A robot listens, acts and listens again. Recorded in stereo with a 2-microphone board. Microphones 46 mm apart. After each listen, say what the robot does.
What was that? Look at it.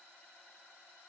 Keep listening.
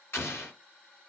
Turn 60° left.
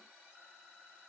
Keep listening.
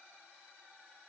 I heard an explosion, but can't make it out now. It was about straight ahead or 60° left.